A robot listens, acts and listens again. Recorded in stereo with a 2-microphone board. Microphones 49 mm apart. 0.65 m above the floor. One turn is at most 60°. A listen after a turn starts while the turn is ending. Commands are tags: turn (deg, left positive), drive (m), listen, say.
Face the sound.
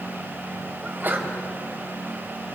<turn deg="-40"/>
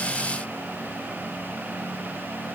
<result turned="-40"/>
<listen/>
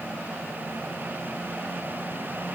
<say>I heard a sneeze, but can't make it out now. It was about straight ahead or 100° right.</say>